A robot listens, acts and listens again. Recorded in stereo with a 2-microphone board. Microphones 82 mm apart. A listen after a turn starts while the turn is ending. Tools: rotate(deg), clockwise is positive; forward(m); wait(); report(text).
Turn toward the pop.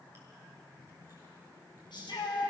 wait()
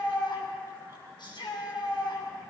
wait()
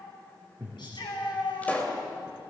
rotate(-15)
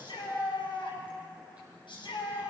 wait()
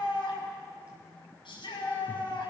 report("I heard a pop, but can't make it out now. It was about straight ahead or 150° left.")